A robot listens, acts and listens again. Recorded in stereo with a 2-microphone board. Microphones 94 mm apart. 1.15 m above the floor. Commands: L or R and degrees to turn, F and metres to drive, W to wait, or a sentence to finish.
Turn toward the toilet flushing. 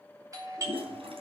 R90
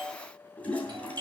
L10
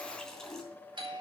Found it: a toilet flushing, straight ahead.